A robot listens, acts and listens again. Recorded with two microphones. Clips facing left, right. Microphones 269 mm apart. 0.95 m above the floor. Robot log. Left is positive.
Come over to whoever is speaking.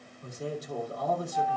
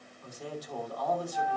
note: The man speaking: about 25° left or 155° left.
cmd yaw +25
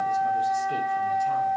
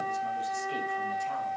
cmd idle
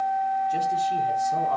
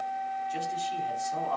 cmd idle
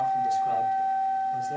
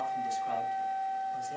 end: I heard a man speaking, but can't make it out now. It was about straight ahead or 130° left. I did not reach it.